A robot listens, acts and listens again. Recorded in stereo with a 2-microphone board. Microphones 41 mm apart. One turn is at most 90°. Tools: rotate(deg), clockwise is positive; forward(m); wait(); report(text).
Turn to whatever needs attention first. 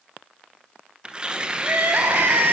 rotate(75)
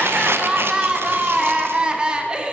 rotate(25)
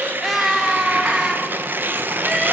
report("Facing the crying, 2 to 4 m away.")